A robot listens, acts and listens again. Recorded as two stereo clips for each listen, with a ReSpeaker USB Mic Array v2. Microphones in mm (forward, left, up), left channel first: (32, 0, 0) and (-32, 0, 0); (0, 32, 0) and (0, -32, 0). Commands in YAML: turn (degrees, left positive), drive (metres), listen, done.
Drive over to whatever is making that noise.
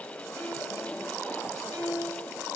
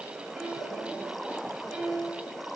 turn: -170
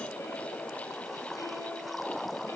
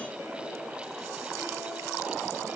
listen: true
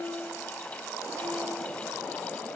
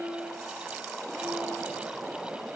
turn: -40
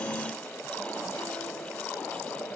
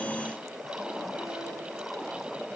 listen: true
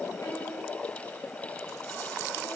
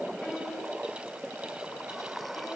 listen: true
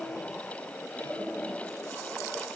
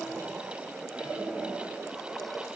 done: "I heard a piano from this way, but can't make it out now. I did not reach it."